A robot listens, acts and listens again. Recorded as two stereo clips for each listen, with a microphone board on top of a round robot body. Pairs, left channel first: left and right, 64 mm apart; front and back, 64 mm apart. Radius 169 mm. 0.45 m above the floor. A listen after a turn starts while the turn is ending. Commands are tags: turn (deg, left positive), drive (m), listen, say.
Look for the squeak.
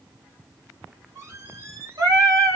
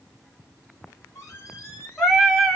<turn deg="-45"/>
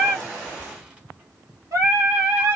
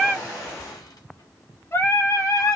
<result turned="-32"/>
<turn deg="-15"/>
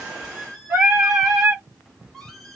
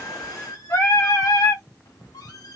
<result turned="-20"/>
<say>Facing the squeak, 1 to 2 m away.</say>